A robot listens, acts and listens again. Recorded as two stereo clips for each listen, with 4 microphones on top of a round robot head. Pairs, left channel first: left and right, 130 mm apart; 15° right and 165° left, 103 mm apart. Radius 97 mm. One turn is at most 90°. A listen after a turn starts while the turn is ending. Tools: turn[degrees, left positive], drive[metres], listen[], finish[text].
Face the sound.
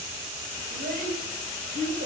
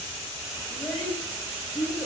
Thought: The child speaking: 100° right.
Action: turn[-90]
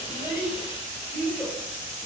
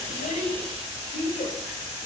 Thought: The child speaking is now 10° left.
Action: turn[10]
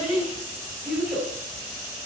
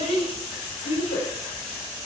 Action: finish[Found it: a child speaking, straight ahead, 2 to 4 m away.]